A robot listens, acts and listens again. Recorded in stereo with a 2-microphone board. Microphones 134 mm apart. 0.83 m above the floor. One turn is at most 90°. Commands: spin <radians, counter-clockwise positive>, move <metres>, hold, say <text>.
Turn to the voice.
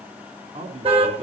spin -0.87
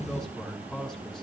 say Facing the man speaking, over 4 m away.